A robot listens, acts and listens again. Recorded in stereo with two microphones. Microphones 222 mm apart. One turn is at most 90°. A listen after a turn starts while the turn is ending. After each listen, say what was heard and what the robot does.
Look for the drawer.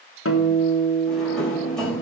Turn 30° left.
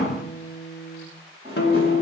So it is at 25° right. Turn 25° right.
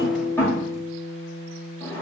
The drawer is now 10° left. Turn 10° left.
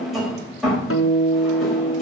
Found it: a drawer, straight ahead.